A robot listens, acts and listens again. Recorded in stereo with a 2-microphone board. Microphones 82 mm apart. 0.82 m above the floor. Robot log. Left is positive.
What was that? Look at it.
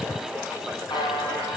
note: The buzzer: about 60° left or 120° left.
cmd yaw +60
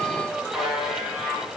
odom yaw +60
end: Facing the buzzer.